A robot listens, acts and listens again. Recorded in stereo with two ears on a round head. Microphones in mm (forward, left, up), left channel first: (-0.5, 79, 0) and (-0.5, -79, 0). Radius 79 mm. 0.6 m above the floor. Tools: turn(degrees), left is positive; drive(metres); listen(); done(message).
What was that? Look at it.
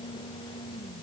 listen()
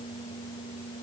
listen()
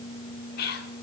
turn(degrees=60)
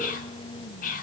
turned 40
turn(degrees=60)
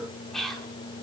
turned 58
done("Facing the whispering.")